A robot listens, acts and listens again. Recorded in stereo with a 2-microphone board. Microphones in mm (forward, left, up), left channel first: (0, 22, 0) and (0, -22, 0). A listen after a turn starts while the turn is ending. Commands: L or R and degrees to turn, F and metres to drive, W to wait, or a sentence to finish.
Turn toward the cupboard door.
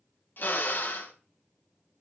W
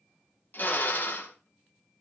W
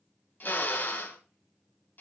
I can't make out a cupboard door, only a drill.